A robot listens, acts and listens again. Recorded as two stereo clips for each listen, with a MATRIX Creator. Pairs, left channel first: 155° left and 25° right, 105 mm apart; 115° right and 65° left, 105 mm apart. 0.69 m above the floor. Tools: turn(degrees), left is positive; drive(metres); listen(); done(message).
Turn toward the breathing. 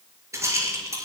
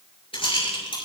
listen()
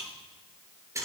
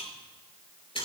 listen()
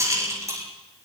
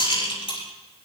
done("I can't make out breathing, only a rattle.")